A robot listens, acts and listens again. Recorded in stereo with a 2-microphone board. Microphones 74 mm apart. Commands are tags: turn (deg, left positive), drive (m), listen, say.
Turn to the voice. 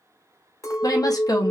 <turn deg="55"/>
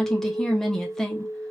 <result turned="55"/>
<say>Facing the woman speaking.</say>